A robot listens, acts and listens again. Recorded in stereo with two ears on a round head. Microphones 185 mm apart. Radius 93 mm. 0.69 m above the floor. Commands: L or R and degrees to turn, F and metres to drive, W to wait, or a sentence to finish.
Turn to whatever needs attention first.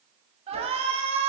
R30
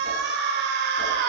R120
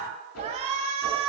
R35
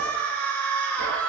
Found it: a shout, straight ahead, over 4 m away.